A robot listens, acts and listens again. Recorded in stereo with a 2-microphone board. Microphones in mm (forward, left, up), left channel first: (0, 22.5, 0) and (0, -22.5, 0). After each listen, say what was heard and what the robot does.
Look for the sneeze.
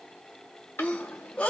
The sneeze: about 30° left or 150° left. Turn 30° left.
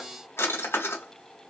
Keep listening.
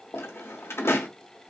I heard a sneeze, but can't make it out now. It was about straight ahead or 120° left.